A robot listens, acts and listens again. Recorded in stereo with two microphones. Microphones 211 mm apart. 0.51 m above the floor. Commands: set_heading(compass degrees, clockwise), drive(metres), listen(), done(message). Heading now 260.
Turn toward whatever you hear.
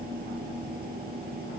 listen()
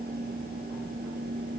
listen()
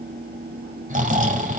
set_heading(300)
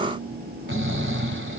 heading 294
set_heading(39)
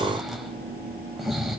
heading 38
done("Found it: snoring, straight ahead.")